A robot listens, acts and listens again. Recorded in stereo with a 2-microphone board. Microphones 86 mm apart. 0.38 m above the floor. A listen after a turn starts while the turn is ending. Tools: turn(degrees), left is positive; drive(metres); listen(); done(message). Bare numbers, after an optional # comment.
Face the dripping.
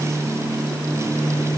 listen()
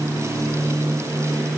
listen()
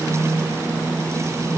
done("I can't make out dripping to turn to.")